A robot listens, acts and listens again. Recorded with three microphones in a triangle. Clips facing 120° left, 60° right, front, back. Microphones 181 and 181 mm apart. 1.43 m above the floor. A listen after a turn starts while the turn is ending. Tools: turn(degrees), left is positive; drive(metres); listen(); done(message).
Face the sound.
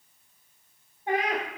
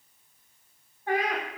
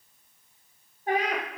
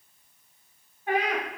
turn(degrees=55)
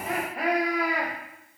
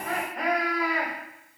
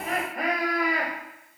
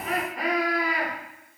turn(degrees=45)
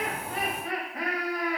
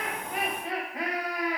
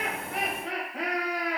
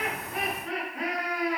turn(degrees=15)
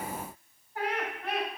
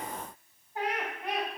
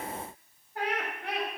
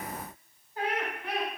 turn(degrees=15)
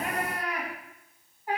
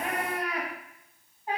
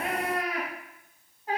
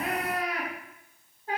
done("Facing the laughter.")